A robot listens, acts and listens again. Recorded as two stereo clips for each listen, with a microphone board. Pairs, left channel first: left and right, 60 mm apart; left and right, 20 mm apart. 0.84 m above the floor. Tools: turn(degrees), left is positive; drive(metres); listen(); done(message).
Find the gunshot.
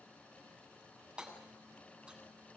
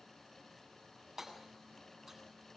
listen()
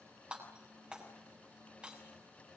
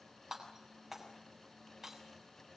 listen()
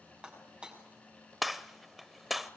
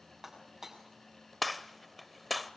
turn(degrees=30)
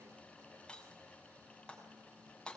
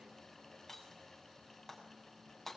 listen()
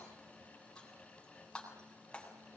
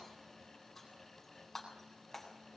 done("I heard a gunshot, but can't make it out now. It was about 30° right or 150° left.")